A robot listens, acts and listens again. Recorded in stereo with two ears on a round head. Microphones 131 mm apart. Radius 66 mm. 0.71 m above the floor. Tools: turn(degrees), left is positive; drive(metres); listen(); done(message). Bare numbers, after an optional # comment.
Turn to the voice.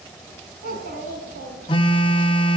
# The child speaking: about 60° right or 120° right.
turn(-60)
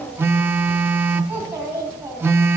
# So it is at 15° right.
turn(-15)
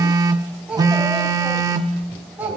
# The child speaking is now 10° right.
turn(-10)
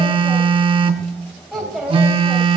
done("Found it: a child speaking, straight ahead.")